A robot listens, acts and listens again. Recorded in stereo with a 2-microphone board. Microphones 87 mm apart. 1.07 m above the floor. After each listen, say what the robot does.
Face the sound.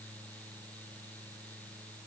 Keep listening.
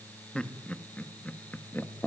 Turn 30° left.
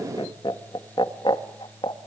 Turn 105° left.
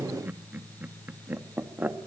Turn 20° right.
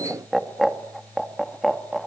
Found it: laughter, straight ahead, 2 to 4 m away.